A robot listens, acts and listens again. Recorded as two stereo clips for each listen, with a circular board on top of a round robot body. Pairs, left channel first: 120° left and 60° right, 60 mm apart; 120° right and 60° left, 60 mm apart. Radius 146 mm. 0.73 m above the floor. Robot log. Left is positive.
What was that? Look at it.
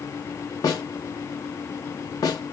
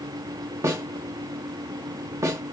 note: The snare drum: 100° left.
cmd yaw +100
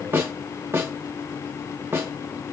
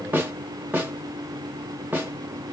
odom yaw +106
note: The snare drum is now 10° right.
cmd yaw -10
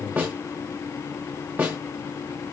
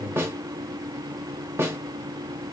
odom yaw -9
end: Found it: a snare drum, straight ahead, under 1 m away.